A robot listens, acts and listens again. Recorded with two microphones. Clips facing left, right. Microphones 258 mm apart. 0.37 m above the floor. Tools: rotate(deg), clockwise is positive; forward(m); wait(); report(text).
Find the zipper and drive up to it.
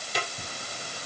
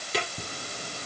rotate(45)
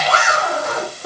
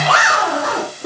rotate(90)
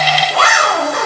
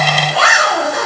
forward(1.0)
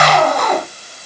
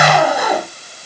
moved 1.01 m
rotate(10)
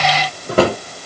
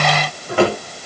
wait()
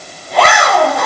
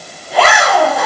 forward(1.0)
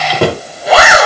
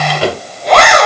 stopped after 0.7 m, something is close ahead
report("I am next to the zipper.")